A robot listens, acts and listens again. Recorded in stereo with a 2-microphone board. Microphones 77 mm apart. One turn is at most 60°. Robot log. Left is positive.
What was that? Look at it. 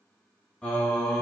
cmd yaw +30
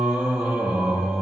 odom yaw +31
note: So it is at 15° right.
cmd yaw -15
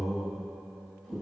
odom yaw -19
end: Facing the singing.